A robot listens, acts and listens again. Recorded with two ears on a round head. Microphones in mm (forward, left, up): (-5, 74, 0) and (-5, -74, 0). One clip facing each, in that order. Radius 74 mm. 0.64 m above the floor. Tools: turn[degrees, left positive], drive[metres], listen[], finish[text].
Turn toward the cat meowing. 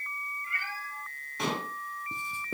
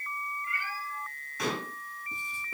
Thought: The cat meowing: about 55° left or 125° left.
Action: turn[55]
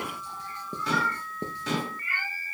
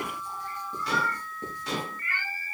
Thought: So it is at 10° left.
Action: turn[10]
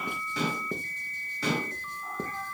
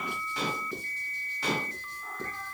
Action: listen[]
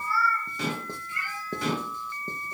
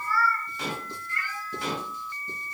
Thought: The cat meowing is now 10° left.
Action: turn[10]
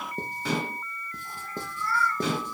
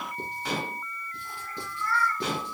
Action: finish[Found it: a cat meowing, straight ahead.]